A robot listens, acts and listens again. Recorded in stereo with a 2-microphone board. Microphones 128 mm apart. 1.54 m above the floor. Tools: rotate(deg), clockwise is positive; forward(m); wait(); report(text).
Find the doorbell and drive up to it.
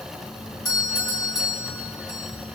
rotate(-30)
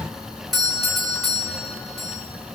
forward(1.0)
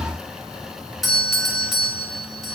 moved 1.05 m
forward(1.0)
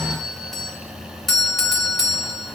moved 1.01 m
forward(1.0)
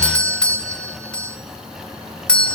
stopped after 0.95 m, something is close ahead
rotate(-10)
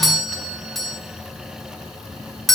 report("Arrived at the doorbell, straight ahead.")